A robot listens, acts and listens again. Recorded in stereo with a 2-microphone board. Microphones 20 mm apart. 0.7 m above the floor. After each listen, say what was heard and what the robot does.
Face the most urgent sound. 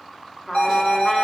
The alarm: about 65° left or 115° left. Turn 65° left.
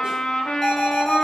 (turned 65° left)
So it is at 20° left. Turn 20° left.
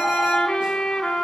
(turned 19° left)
Keep listening.
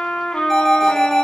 Found it: an alarm, straight ahead, 2 to 4 m away.